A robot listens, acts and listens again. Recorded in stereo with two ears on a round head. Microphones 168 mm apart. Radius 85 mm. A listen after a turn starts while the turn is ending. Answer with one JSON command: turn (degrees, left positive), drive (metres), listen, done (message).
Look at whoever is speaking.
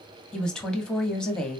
{"turn": 30}
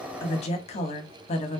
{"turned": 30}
{"turn": 145}
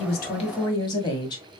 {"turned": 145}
{"turn": 20}
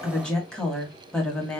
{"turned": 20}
{"done": "Found it: a woman speaking, straight ahead."}